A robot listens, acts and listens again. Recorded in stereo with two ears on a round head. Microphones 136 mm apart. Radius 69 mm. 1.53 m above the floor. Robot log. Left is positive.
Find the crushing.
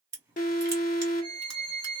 note: The crushing: about 20° right or 160° right.
cmd yaw -20
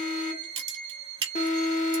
note: So it is at 135° right.
cmd yaw -135
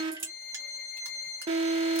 note: The crushing is now 20° right.
cmd yaw -20
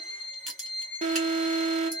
end: Facing the crushing, 1 to 2 m away.